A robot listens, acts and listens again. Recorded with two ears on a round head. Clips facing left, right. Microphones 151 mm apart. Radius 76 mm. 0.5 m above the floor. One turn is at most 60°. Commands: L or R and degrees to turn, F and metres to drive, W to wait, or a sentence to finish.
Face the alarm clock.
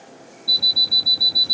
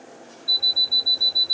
L60
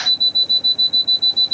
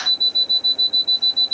Found it: an alarm clock, straight ahead.